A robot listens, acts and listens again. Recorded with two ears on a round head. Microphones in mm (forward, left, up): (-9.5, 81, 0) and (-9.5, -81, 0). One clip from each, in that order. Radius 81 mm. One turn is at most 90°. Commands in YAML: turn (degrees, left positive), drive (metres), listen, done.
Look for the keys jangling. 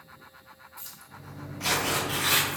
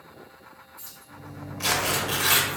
turn: 45
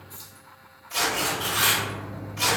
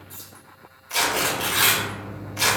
turn: -35
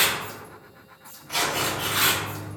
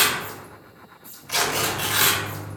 turn: -55
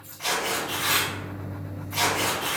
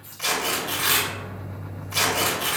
listen: true
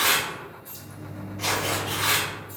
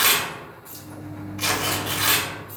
listen: true
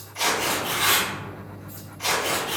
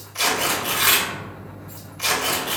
done: "I heard keys jangling from this way, but can't make it out now."